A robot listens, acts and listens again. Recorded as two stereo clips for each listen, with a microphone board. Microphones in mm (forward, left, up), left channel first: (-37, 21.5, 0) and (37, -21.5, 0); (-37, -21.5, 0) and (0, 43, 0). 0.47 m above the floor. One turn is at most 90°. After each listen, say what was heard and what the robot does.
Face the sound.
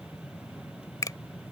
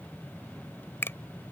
The finger snap: 175° right. Turn 90° right.
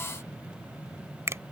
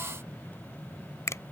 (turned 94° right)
The finger snap is now 80° right. Turn 80° right.
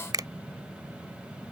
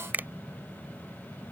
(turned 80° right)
Found it: a finger snap, straight ahead.